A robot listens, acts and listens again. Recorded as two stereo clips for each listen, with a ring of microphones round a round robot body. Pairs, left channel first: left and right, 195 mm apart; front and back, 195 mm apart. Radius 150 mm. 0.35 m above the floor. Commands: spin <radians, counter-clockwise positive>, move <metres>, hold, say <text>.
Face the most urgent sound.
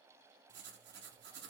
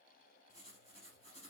hold
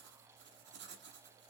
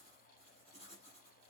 hold
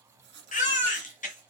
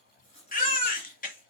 spin 0.70
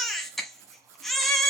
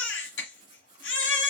say Facing the baby crying, 1 to 2 m away.